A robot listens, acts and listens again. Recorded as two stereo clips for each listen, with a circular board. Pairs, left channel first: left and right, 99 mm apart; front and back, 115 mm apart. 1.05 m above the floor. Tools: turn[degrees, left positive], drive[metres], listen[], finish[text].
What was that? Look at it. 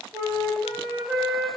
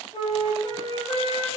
Thought: The flute: 45° right.
Action: turn[-45]
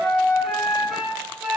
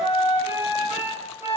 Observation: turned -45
Thought: The flute is now 10° right.
Action: turn[-10]
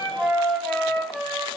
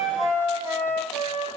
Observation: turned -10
Action: finish[Found it: a flute, straight ahead, 1 to 2 m away.]